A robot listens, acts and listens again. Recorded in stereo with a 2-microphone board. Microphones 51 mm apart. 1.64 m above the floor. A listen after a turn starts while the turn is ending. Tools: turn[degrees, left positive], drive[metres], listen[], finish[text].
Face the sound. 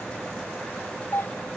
Thought: The doorbell: about 60° left or 120° left.
Action: turn[60]
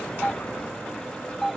Action: finish[Found it: a doorbell, straight ahead.]